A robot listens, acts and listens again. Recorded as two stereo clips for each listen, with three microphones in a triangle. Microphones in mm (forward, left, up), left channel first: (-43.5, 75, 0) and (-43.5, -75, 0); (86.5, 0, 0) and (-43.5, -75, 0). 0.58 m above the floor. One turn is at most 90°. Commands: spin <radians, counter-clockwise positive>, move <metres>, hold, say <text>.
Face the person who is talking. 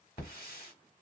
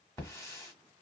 hold
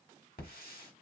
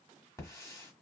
hold
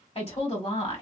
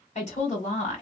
spin 0.96
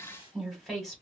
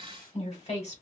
say Found it: a woman speaking, straight ahead, 1 to 2 m away.